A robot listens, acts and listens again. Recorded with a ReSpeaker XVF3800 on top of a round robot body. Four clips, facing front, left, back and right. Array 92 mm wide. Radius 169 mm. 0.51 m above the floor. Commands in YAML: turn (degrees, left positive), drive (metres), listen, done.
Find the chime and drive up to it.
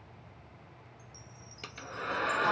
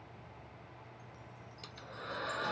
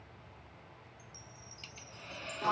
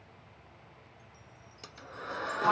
turn: 60
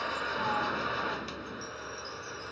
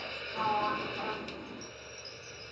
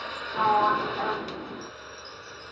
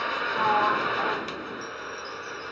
listen: true
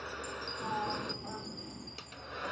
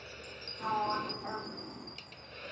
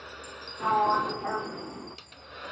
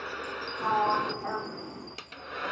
listen: true
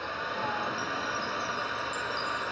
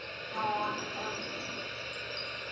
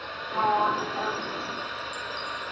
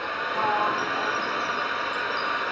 done: "I heard a chime from this way, but can't make it out now. I did not reach it."